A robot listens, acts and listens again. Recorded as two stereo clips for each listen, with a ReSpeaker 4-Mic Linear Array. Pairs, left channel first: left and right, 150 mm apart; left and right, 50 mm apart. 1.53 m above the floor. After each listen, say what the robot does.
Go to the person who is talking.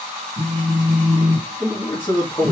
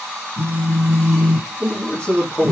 Turn 30° left.
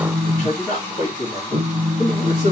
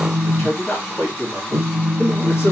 Turn 120° left.
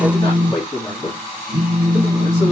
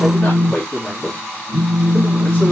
Turn 25° left.
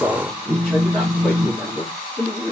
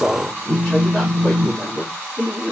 Drive 1.0 m forward.
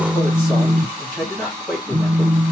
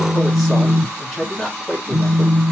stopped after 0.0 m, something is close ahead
Something is in my way. I am facing the man speaking but have not reached it.